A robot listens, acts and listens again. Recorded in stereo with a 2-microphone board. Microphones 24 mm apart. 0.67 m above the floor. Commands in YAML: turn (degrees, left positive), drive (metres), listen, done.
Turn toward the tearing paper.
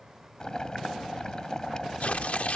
turn: 70
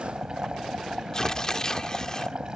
turn: 30
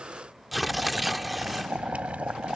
done: "Facing the tearing paper."